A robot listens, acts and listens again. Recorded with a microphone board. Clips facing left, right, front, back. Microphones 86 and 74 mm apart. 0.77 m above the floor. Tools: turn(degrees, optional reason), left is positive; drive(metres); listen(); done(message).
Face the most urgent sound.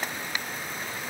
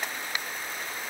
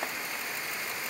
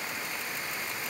listen()
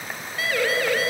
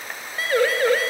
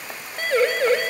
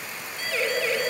turn(degrees=-35, reason="The siren: 35° right.")
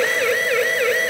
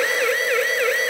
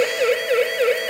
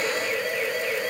done("Found it: a siren, straight ahead.")